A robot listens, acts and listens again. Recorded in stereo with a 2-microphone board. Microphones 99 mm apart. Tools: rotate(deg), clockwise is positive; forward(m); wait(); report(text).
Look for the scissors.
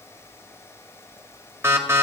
wait()
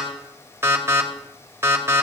wait()
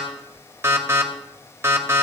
report("I can't make out scissors, only an alarm.")